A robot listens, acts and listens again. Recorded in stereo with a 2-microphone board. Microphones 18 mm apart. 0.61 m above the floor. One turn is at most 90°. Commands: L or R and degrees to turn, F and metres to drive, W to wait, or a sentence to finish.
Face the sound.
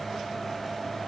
W
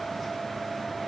W
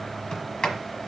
L50
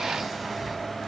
W
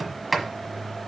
Found it: a sliding door, straight ahead.